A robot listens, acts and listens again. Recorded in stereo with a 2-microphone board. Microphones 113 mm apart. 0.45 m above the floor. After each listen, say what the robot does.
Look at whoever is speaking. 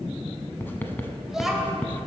Turn 30° right.
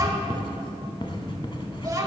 Turn 145° right.
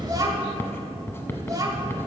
Turn 35° right.
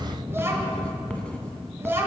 Turn 25° right.
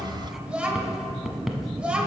Turn 10° right.
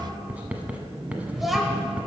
Facing the child speaking.